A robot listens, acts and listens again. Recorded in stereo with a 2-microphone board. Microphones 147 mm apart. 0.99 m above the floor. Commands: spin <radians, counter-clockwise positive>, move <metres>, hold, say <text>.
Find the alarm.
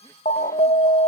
spin 1.05
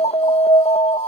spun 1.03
spin 0.79
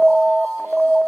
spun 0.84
say Found it: an alarm, straight ahead.